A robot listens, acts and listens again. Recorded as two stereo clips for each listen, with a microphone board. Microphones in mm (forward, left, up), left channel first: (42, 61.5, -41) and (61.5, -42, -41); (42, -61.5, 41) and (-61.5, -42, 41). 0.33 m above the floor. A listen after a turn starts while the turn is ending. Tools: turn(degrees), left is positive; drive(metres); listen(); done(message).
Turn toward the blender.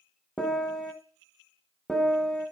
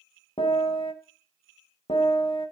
listen()
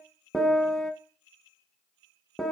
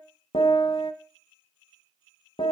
listen()
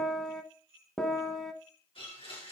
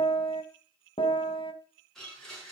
turn(degrees=75)
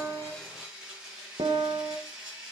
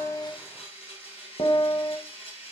done("Facing the blender.")